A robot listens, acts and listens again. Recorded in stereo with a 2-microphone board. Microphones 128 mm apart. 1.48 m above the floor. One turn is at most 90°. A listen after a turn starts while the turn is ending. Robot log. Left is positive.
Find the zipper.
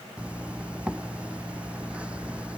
cmd yaw -30
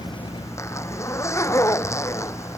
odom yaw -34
note: So it is at 25° left.
cmd yaw +25
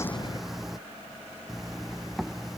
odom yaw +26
end: Facing the zipper.